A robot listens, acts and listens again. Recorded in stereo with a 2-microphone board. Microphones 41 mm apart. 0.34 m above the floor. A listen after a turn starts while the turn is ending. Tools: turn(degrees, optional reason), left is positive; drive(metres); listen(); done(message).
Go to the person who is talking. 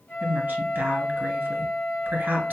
turn(degrees=-55, reason="The woman speaking: about 55° right or 125° right.")
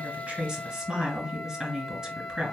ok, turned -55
turn(degrees=-15, reason="So it is at 15° right.")
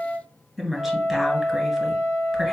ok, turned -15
drive(metres=1.0)
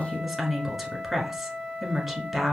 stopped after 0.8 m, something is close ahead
done("Arrived at the woman speaking, straight ahead.")